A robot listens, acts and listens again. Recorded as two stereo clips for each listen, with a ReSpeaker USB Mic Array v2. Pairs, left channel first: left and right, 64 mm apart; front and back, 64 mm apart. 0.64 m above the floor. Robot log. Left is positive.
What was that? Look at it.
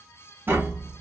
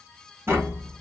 note: The tapping: 140° right.
cmd yaw -140
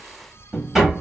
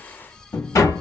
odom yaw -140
note: The tapping is now 10° right.
cmd yaw -10
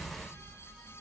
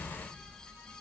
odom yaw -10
cmd idle
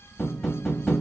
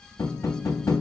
end: Facing the tapping, 1 to 2 m away.